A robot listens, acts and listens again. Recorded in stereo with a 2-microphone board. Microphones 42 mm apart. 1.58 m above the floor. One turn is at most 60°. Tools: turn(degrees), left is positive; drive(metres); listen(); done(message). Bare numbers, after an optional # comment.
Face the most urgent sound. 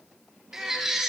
turn(-30)
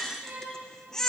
# So it is at 15° left.
turn(15)
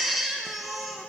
done("Found it: a baby crying, straight ahead.")